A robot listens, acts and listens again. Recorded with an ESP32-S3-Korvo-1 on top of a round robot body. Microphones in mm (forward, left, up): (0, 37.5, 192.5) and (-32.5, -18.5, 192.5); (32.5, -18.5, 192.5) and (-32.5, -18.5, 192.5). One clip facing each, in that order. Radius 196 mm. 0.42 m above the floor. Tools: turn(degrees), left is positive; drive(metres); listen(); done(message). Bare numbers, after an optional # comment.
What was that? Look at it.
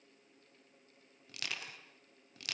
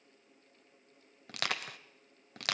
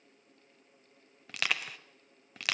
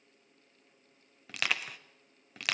# The crushing: 90° right.
turn(-90)
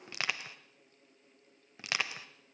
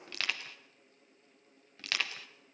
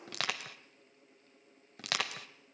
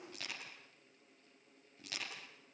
# The crushing is now 10° right.
turn(-10)
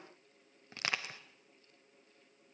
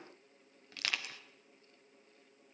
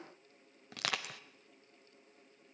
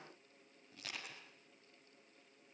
done("Found it: crushing, straight ahead.")